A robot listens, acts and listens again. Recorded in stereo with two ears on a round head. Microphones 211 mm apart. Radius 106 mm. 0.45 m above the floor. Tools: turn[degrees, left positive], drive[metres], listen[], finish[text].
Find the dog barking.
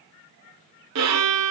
Action: listen[]
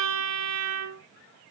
Action: listen[]
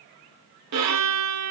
Action: finish[I can't make out a dog barking to turn to.]